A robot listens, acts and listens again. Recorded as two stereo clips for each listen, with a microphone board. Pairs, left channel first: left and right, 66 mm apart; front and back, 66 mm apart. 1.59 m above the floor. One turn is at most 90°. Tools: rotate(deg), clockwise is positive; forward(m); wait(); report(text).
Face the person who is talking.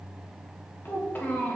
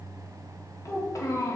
rotate(-30)
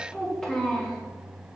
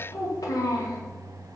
report("Found it: a child speaking, straight ahead.")